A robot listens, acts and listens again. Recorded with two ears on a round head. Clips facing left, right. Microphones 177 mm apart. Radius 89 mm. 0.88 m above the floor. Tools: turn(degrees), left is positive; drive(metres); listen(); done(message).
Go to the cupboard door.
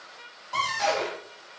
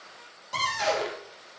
turn(degrees=-20)
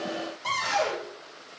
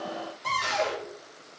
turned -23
drive(metres=1.0)
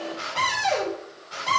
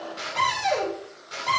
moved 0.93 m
drive(metres=1.0)
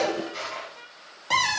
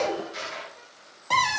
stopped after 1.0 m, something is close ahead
done("I am next to the cupboard door.")